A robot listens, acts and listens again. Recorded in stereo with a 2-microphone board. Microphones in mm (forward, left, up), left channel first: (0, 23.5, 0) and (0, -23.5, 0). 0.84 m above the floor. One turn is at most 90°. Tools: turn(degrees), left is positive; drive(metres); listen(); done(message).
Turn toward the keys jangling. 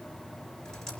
listen()
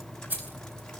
turn(degrees=-40)
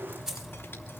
turn(degrees=-10)
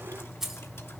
done("Found it: keys jangling, straight ahead, over 4 m away.")